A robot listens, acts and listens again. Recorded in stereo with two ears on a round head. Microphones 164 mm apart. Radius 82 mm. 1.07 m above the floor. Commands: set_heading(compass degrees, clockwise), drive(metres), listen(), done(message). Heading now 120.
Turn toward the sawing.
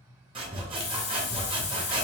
set_heading(150)
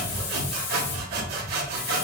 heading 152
set_heading(267)
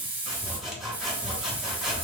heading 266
done("Found it: sawing, straight ahead, 1 to 2 m away.")